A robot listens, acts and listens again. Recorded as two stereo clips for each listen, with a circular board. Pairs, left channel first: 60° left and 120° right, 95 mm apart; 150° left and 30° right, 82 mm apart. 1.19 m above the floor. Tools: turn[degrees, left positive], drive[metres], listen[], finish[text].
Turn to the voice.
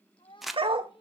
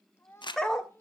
Thought: The child speaking: 90° left.
Action: turn[90]
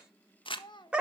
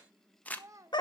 Thought: The child speaking is now 20° left.
Action: turn[20]
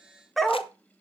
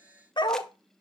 Action: listen[]
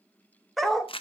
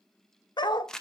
Action: listen[]
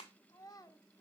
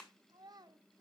Thought: The child speaking is now 10° left.
Action: turn[10]
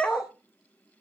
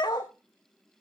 Action: listen[]
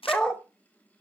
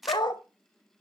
Action: listen[]
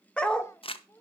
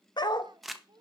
Action: finish[Found it: a child speaking, straight ahead, 1 to 2 m away.]